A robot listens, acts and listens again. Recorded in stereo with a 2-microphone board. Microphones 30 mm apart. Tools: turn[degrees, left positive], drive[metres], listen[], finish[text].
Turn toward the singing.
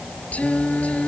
Thought: The singing: about 50° left or 130° left.
Action: turn[50]
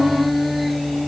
Action: finish[Found it: singing, straight ahead.]